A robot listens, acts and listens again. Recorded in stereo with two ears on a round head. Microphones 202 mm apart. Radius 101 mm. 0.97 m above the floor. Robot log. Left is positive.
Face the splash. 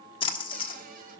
note: The splash: about 20° left or 160° left.
cmd yaw +20
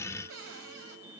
cmd idle
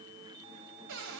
end: I heard a splash, but can't make it out now. It was about straight ahead or 140° left.